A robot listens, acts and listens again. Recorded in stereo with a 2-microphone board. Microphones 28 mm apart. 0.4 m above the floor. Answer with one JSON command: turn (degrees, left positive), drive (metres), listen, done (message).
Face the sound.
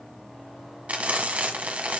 {"turn": -60}
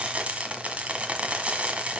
{"turn": -55}
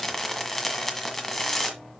{"turn": 10}
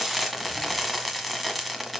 {"done": "Facing the frying."}